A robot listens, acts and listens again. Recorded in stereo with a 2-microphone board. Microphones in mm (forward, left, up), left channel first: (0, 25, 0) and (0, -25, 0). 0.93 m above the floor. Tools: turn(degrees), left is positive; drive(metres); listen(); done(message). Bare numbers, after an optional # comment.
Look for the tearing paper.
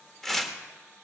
turn(30)
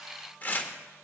# So it is at 145° left.
turn(145)
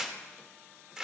# The tearing paper is now 10° right.
turn(-10)
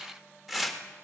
done("Facing the tearing paper.")